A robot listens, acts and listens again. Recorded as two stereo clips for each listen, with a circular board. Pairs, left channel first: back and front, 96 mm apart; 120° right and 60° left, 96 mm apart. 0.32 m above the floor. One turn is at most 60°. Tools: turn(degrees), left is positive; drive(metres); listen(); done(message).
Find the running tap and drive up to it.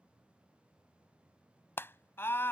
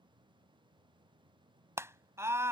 listen()
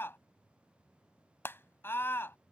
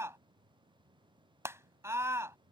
listen()
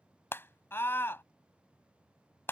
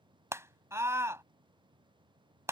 done("I can't make out a running tap, only a scream.")